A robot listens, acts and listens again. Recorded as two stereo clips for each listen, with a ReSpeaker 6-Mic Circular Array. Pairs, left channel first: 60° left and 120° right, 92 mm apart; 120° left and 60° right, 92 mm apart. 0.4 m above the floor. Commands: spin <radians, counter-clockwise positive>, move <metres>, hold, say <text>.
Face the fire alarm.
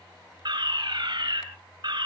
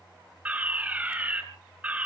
spin -2.27
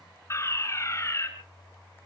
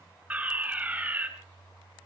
spin 0.17
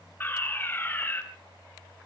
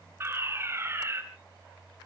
say Facing the fire alarm.